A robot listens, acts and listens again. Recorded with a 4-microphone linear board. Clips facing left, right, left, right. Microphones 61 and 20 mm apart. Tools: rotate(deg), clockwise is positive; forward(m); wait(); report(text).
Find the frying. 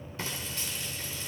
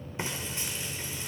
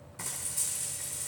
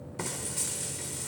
rotate(20)
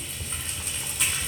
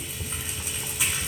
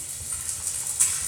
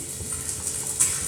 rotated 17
report("Facing the frying, 2 to 4 m away.")